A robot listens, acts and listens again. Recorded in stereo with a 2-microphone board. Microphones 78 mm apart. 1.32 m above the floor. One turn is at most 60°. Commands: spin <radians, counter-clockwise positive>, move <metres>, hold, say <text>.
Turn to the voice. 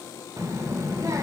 spin -0.70
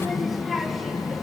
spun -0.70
say Found it: a child speaking, straight ahead, under 1 m away.